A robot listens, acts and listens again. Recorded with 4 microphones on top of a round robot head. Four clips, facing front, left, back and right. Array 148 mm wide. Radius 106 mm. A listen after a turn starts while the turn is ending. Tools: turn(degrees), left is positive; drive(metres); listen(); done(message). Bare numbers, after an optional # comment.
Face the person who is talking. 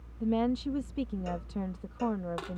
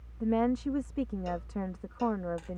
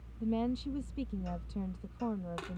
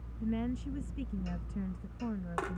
# The woman speaking: 70° left.
turn(70)
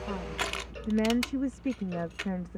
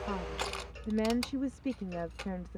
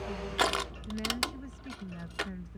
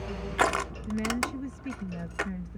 # The woman speaking is now 30° left.
turn(30)
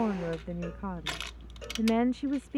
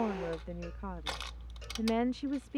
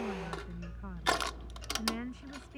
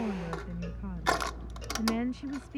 # The woman speaking is now 20° left.
turn(20)
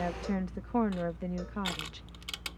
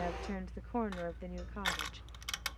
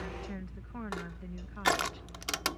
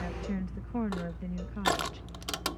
done("Found it: a woman speaking, straight ahead.")